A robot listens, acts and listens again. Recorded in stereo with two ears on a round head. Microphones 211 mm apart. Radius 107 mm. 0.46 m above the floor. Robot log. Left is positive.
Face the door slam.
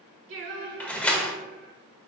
cmd yaw +30
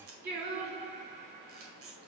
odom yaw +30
cmd idle
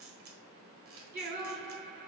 end: I heard a door slam, but can't make it out now. It was about 25° right or 145° left.